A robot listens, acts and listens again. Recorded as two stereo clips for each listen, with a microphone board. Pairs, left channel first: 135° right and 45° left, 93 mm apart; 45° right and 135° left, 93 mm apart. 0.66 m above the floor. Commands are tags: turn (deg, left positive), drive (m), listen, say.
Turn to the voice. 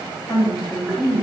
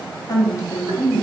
<turn deg="-90"/>
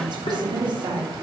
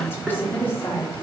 <turn deg="20"/>
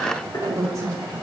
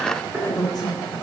<say>Facing the woman speaking.</say>